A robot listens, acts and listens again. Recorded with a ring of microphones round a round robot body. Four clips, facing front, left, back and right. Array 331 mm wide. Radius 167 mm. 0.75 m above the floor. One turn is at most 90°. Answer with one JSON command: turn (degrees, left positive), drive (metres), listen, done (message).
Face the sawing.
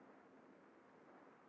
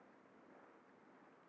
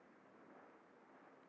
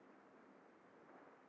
{"listen": true}
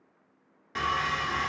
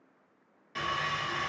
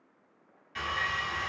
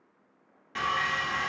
{"turn": -25}
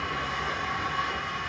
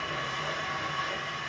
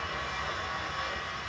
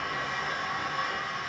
{"turn": -15}
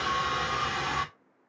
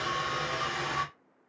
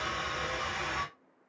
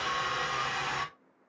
{"done": "Found it: sawing, straight ahead."}